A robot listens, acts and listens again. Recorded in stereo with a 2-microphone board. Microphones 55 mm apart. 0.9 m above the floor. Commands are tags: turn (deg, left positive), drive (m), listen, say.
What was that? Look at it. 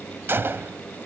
<turn deg="-45"/>
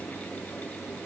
<listen/>
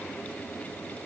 <say>I heard a gunshot, but can't make it out now. It was about straight ahead or 90° right.</say>